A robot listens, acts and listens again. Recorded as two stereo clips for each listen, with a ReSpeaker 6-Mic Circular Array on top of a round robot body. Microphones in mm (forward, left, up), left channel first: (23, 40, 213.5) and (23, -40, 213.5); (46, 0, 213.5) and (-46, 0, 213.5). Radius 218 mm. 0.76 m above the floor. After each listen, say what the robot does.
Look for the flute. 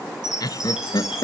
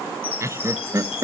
Keep listening.
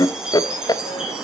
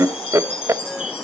Keep listening.
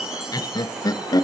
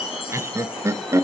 I can't make out a flute, only laughter and a chime.